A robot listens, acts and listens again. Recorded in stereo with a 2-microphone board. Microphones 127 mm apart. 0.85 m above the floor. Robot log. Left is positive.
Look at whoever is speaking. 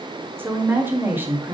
note: The woman speaking: about 15° right or 165° right.
cmd yaw -15
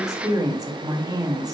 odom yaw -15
note: So it is at 150° right.
cmd yaw -150
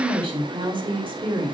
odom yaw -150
note: The woman speaking is now 50° right.
cmd yaw -50
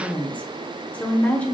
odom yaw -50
note: The woman speaking is now 15° left.
cmd yaw +15
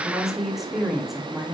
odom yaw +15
end: Facing the woman speaking, 1 to 2 m away.